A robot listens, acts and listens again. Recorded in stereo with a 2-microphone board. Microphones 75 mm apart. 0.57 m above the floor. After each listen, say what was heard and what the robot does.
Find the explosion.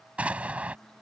The explosion: about 15° right or 165° right. Turn 15° right.
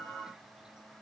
Keep listening.
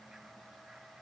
I heard an explosion, but can't make it out now. It was about straight ahead or 150° right.